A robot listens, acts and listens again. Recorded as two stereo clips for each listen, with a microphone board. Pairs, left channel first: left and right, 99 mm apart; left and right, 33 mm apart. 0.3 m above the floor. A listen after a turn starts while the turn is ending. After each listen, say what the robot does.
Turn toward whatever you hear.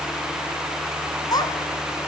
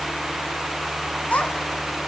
Turn 40° left.
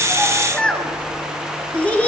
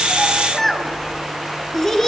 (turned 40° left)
Turn 15° left.
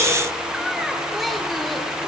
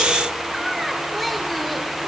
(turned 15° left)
Found it: a child speaking, straight ahead, 2 to 4 m away.